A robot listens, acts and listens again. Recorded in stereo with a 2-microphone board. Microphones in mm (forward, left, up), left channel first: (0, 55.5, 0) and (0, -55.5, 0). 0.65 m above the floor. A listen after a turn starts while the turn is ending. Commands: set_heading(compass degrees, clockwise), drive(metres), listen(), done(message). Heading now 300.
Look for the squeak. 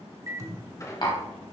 set_heading(270)
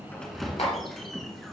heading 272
done("Facing the squeak, 1 to 2 m away.")